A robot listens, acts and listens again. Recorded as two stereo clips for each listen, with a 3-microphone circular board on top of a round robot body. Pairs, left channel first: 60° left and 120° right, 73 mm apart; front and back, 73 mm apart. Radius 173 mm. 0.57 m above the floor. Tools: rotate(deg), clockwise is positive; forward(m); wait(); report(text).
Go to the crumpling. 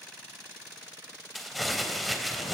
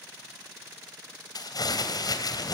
rotate(30)
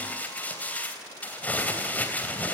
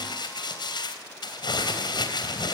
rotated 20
rotate(10)
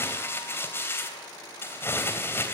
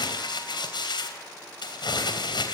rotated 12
forward(1.0)
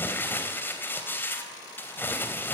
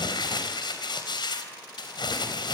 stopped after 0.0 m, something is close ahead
report("Something is in my way. I am facing the crumpling but have not reached it.")